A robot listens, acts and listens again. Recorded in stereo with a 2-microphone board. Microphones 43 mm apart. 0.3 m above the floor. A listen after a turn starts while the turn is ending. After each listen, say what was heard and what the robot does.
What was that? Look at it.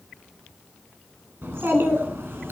The child speaking: about 75° right or 105° right. Turn 75° right.
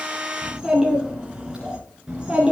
So it is at 20° right. Turn 20° right.
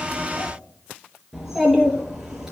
The child speaking is now 10° right. Turn 10° right.
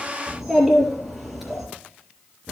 Found it: a child speaking, straight ahead.